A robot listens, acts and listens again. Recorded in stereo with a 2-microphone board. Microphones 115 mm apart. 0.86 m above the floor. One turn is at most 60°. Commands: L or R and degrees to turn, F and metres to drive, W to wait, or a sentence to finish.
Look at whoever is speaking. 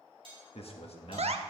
L60
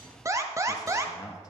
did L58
L40
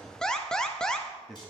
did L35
Facing the man speaking.